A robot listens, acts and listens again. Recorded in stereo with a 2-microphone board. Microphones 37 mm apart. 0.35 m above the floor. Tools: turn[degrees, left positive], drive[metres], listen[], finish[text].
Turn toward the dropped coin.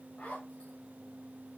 Action: listen[]
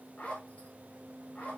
Action: listen[]
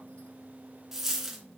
Action: turn[-30]
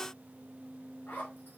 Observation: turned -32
Action: listen[]
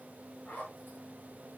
Action: finish[I heard a dropped coin, but can't make it out now. It was about 20° left or 135° right.]